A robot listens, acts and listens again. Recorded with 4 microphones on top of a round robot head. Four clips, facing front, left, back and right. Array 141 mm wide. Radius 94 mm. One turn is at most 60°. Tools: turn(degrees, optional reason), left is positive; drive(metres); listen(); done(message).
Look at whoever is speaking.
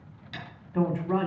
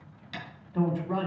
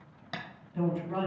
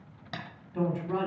turn(degrees=15, reason="The woman speaking: 15° left.")
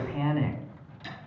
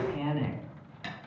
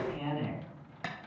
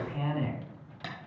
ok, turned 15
done("Facing the woman speaking.")